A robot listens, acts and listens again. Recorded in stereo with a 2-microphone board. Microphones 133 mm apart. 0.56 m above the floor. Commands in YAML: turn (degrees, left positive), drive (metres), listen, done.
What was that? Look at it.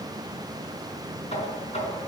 turn: 55
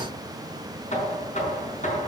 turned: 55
turn: 70
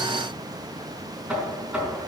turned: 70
done: "Facing the knocking, over 4 m away."